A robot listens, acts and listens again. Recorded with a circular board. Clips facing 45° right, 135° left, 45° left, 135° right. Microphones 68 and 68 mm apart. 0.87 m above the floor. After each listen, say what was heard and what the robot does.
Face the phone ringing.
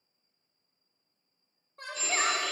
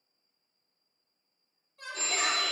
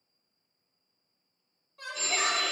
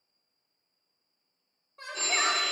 The phone ringing: straight behind. Turn 180° left.
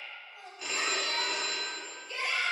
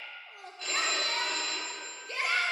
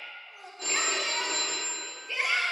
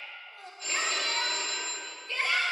The phone ringing is now 30° left. Turn 30° left.
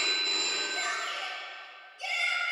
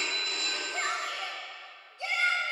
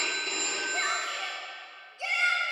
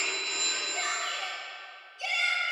Found it: a phone ringing, straight ahead.